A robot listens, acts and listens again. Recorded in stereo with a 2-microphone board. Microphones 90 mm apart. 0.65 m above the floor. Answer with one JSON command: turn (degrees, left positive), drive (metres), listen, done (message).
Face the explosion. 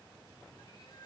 {"listen": true}
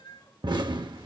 {"turn": -55}
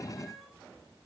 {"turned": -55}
{"listen": true}
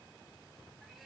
{"done": "I heard an explosion, but can't make it out now. It was about straight ahead or 70° right."}